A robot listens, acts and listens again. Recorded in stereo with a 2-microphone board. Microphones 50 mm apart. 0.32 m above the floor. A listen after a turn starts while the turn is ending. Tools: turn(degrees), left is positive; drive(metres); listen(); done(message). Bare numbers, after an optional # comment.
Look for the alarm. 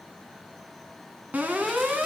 # The alarm: about 35° right or 145° right.
turn(-35)
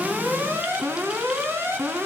# So it is at 110° right.
turn(-110)
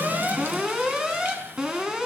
# The alarm is now 15° right.
turn(-15)
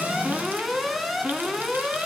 done("Facing the alarm, 2 to 4 m away.")